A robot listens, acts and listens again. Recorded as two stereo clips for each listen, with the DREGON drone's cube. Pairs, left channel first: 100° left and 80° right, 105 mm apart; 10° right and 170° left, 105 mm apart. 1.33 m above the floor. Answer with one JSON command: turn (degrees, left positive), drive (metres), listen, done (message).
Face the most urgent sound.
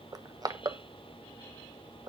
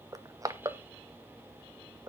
{"listen": true}
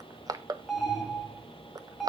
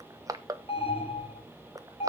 {"turn": 10}
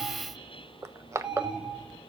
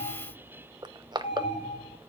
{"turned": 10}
{"done": "Facing the alarm."}